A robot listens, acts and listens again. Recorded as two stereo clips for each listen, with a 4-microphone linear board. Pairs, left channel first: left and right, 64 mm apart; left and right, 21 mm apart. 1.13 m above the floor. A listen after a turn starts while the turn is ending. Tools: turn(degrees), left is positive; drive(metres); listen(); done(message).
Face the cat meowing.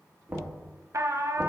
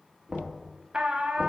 listen()
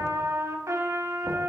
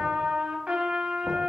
listen()
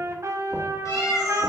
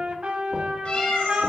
turn(degrees=60)
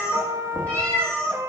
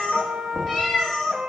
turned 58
turn(degrees=15)
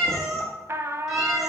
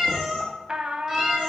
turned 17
done("Facing the cat meowing.")